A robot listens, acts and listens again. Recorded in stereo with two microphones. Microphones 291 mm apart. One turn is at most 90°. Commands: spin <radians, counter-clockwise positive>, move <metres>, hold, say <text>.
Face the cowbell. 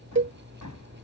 spin -0.70
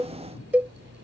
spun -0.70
say Facing the cowbell.